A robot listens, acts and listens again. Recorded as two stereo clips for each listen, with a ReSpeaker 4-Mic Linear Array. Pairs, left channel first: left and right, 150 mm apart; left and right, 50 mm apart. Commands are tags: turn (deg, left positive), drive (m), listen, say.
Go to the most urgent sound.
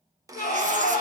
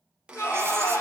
<turn deg="70"/>
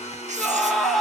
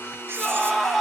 <drive m="1.0"/>
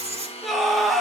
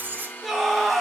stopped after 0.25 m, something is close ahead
<say>Blocked. The scream is further on, straight ahead.</say>